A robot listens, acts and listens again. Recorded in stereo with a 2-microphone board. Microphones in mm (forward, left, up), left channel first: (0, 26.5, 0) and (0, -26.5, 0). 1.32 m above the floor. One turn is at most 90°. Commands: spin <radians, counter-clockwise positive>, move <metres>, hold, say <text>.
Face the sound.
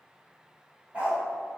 spin -0.44
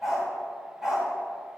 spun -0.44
spin -0.52
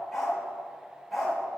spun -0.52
say Facing the dog barking, 2 to 4 m away.